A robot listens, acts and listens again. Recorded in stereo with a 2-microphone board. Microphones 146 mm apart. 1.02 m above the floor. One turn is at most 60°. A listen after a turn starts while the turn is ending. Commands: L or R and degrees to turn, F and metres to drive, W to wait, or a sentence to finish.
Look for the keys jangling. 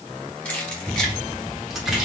L30
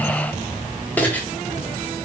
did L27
L30
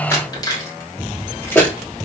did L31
L30
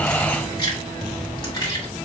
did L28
L60
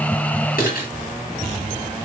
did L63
L60
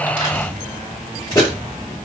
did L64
L25
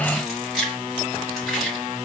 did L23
Facing the keys jangling, 1 to 2 m away.